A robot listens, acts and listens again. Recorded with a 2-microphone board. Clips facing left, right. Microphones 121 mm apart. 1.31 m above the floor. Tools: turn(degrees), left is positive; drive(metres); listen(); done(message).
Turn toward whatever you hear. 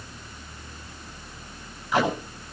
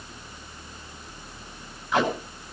turn(degrees=30)
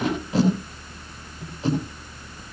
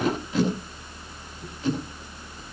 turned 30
turn(degrees=145)
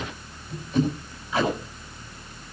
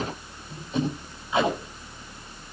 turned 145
turn(degrees=-20)
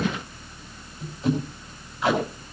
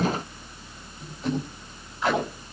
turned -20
done("Found it: tape being pulled, straight ahead, over 4 m away.")